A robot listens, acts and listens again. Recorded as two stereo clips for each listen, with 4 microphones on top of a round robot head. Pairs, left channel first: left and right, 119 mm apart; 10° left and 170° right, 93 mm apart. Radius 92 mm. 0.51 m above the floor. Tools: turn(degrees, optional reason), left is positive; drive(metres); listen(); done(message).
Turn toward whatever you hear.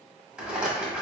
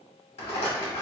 turn(degrees=-10, reason="The rattle: 10° right.")
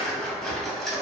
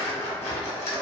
done("Found it: a rattle, straight ahead.")